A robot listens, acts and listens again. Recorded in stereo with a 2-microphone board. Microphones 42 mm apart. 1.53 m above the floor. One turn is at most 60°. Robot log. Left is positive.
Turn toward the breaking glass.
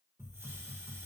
cmd idle
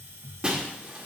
note: The breaking glass: about 20° right or 160° right.
cmd yaw -20
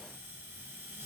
cmd idle
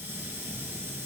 end: I heard breaking glass, but can't make it out now. It was about straight ahead or 140° right.